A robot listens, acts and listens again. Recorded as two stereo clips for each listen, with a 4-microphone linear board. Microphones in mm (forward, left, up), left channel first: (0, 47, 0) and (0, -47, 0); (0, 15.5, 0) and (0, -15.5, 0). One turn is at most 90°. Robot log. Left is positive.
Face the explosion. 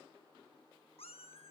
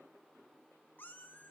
cmd idle
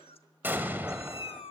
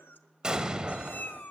note: The explosion: about 20° right or 160° right.
cmd yaw -20
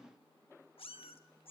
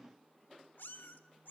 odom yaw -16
cmd idle
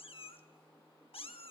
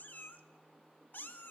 end: I heard an explosion, but can't make it out now. It was about 5° right or 140° right.